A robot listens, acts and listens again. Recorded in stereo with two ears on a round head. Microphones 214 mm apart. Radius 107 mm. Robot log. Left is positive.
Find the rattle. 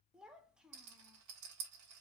cmd yaw -90
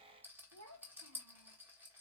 note: So it is at 10° right.
cmd yaw -10
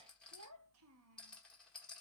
end: Facing the rattle.